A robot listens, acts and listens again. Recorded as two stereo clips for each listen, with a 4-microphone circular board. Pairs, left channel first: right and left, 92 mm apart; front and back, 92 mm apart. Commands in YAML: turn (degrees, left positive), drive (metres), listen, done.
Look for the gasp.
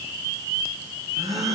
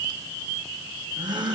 turn: 145
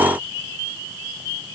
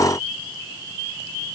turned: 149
done: "I heard a gasp from this way, but can't make it out now."